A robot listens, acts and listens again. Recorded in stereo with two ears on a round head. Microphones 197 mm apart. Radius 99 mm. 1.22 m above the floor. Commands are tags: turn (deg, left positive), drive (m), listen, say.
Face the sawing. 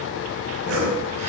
<turn deg="-70"/>
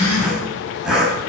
<say>Facing the sawing.</say>